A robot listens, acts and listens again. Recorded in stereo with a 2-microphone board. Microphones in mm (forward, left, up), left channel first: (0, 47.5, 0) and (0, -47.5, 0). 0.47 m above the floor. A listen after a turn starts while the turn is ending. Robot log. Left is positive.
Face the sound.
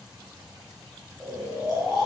cmd yaw -30
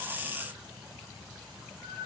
note: So it is at 25° left.
cmd yaw +25
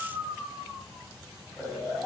end: Found it: snoring, straight ahead.